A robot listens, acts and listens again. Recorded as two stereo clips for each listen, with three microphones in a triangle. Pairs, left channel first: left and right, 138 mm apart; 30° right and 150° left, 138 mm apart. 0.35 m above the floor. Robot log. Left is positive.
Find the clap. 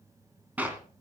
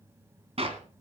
note: The clap: 170° right.
cmd yaw -170
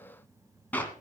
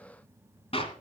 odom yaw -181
note: The clap is now 10° left.
cmd yaw +10
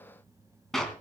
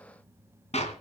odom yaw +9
end: Facing the clap, 2 to 4 m away.